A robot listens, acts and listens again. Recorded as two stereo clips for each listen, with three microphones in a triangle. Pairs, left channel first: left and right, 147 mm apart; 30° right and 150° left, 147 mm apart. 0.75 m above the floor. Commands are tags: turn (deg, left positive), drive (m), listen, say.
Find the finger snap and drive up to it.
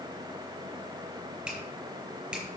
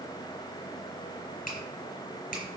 <drive m="1.0"/>
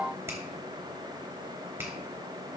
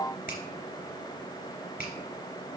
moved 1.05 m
<turn deg="-15"/>
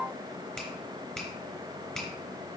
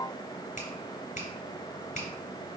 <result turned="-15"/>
<drive m="1.0"/>
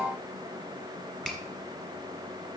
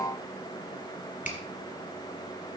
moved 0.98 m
<drive m="1.0"/>
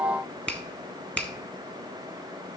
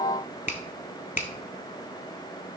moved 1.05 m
<drive m="1.0"/>
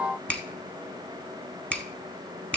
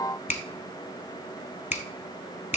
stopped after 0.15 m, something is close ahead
<turn deg="10"/>
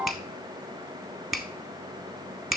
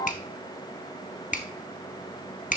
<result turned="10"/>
<say>I am next to the finger snap.</say>